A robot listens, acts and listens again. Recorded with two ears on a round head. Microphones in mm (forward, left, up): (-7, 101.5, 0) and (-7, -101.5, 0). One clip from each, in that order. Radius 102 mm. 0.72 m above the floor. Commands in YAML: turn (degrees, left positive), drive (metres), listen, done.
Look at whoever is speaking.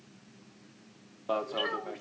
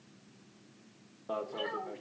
turn: 55
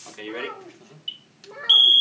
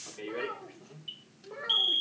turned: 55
turn: 20
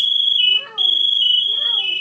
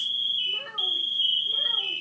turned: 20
turn: 10
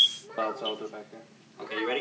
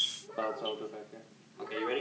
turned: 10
turn: 20
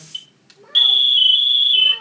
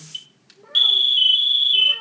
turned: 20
done: "Facing the child speaking, 2 to 4 m away."